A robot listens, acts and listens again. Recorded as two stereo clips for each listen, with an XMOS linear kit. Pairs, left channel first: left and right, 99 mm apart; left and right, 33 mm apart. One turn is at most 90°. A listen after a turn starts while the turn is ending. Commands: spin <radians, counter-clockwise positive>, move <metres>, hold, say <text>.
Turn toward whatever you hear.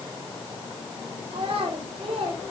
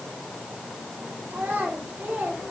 spin -1.57
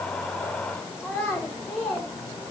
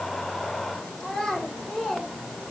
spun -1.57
say Found it: a child speaking, straight ahead, over 4 m away.